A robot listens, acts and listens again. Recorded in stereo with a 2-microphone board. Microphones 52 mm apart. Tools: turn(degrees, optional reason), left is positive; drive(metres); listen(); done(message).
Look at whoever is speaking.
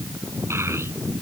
turn(degrees=-55, reason="The child speaking: about 55° right or 125° right.")
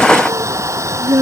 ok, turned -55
turn(degrees=-70, reason="So it is at 70° right.")
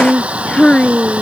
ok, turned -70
turn(degrees=15, reason="The child speaking is now 15° left.")
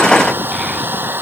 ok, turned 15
listen()
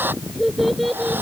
done("Facing the child speaking.")